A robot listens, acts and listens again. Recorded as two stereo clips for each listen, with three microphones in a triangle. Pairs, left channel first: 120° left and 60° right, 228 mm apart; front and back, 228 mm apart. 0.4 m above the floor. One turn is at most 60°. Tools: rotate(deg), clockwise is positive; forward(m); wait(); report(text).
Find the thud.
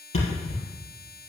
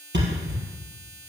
rotate(-60)
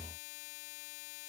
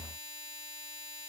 rotate(-60)
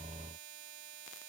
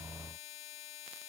rotate(-20)
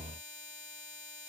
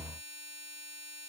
report("Facing where the thud came from. I can't hear it now.")